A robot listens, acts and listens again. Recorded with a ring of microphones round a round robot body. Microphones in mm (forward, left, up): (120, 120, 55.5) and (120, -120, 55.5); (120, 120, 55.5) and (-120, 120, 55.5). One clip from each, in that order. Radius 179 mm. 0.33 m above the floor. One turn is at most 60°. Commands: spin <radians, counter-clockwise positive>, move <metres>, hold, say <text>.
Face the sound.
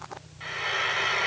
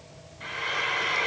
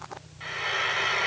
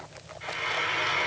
spin 0.35
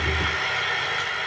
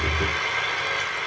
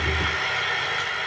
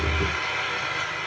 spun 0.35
say Found it: frying, straight ahead, 1 to 2 m away.